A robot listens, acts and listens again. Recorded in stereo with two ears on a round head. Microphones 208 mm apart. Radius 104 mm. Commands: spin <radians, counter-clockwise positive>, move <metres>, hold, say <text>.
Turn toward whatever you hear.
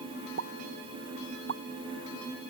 spin -0.87
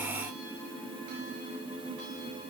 hold
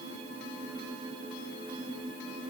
say I heard a pop, but can't make it out now. It was about straight ahead or 80° right.